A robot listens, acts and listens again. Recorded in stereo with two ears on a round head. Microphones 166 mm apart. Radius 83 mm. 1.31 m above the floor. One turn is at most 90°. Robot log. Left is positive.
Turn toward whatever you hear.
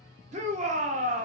note: The shout: about 40° right or 140° right.
cmd yaw -40
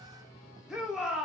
end: Found it: a shout, straight ahead, under 1 m away.